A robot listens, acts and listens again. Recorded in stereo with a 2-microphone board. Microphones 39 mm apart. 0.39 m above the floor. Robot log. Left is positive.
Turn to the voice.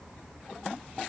cmd idle
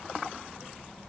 cmd idle
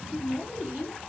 cmd yaw -30
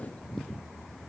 cmd idle
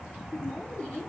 note: So it is at 15° left.
cmd yaw +15
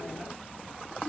cmd idle
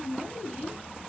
end: Found it: a woman speaking, straight ahead, 2 to 4 m away.